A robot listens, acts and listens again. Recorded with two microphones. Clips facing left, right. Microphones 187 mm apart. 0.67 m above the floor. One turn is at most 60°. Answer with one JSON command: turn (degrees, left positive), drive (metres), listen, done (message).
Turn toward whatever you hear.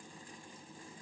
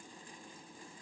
{"listen": true}
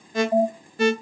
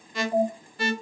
{"turn": 40}
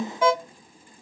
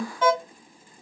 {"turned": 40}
{"turn": 10}
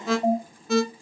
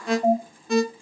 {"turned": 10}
{"done": "Facing the alarm."}